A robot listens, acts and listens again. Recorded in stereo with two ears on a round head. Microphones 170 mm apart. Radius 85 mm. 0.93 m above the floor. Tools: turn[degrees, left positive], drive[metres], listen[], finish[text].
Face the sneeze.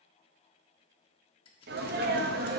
Thought: The sneeze: about 55° right or 125° right.
Action: turn[-55]
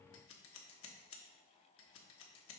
Action: listen[]
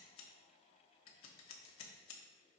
Action: finish[I heard a sneeze, but can't make it out now. It was about straight ahead or 70° right.]